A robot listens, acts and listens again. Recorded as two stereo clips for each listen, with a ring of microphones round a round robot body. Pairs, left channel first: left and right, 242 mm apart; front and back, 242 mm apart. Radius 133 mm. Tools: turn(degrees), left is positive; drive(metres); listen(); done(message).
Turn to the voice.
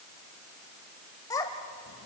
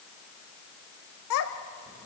turn(degrees=15)
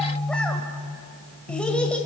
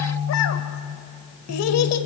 listen()
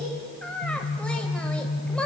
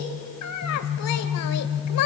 done("Found it: a child speaking, straight ahead.")